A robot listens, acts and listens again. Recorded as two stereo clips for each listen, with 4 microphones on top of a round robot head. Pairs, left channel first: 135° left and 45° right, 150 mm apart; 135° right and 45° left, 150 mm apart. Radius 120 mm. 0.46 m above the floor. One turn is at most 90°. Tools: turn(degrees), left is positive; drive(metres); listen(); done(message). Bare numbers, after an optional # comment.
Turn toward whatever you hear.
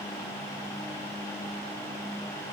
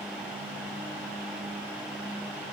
listen()
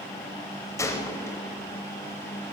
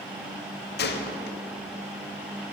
# The gunshot: 155° right.
turn(-90)
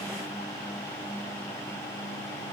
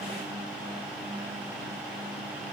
# Nothing new. It was at 65° right.
turn(-65)
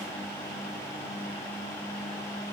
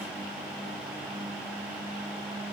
done("I heard a gunshot from this way, but can't make it out now.")